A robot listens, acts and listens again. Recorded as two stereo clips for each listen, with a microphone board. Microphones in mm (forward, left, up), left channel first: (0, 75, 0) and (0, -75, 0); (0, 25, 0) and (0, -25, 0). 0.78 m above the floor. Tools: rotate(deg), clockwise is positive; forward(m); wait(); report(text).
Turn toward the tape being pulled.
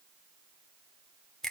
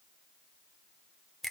wait()
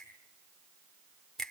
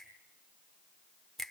wait()
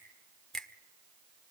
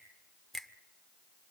report("I can't make out tape being pulled, only a finger snap.")